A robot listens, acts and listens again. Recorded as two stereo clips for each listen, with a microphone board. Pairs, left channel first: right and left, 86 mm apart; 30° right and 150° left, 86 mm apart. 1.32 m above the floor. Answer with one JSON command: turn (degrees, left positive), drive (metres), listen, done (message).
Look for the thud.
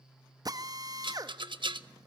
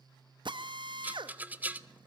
{"listen": true}
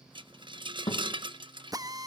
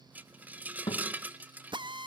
{"turn": -55}
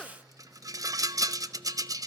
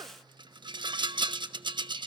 {"done": "Facing where the thud came from. I can't hear it now."}